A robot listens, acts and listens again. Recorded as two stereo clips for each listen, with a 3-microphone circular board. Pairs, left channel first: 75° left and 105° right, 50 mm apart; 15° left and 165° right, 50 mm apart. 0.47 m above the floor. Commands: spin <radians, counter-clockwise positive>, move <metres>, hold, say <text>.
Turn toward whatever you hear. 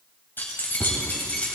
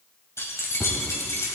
spin 0.26
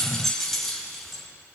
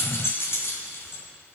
spin -0.26
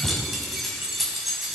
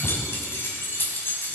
spin -0.35
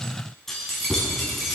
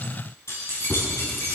spin -0.26
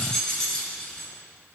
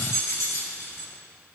say Facing the keys jangling, 2 to 4 m away.